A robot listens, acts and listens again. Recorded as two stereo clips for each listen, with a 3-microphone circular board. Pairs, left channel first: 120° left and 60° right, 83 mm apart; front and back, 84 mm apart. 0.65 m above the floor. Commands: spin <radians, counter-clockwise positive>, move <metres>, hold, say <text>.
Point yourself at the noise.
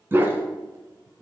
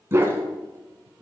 spin -2.09
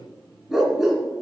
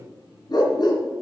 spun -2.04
spin 0.44
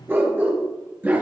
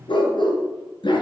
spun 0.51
say Found it: a dog barking, straight ahead, 2 to 4 m away.